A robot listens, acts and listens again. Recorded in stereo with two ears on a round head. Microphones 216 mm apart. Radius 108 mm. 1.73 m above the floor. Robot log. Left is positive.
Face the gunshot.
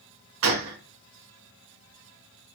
note: The gunshot: about 60° right or 120° right.
cmd yaw -60
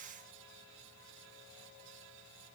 cmd idle
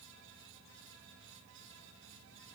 end: I heard a gunshot, but can't make it out now. It was about straight ahead or 60° right.